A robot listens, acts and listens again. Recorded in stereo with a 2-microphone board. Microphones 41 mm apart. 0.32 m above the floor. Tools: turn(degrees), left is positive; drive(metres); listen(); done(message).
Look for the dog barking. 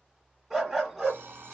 turn(degrees=30)
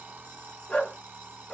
turn(degrees=150)
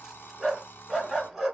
done("Facing the dog barking, 1 to 2 m away.")